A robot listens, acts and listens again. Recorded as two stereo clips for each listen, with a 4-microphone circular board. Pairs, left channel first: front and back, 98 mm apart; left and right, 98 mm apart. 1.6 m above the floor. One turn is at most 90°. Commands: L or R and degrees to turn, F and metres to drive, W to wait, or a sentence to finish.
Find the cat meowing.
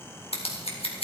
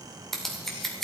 W
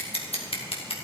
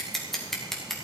W
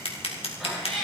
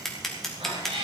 R90
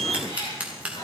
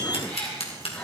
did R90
L15
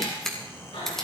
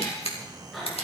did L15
Found it: a cat meowing, straight ahead.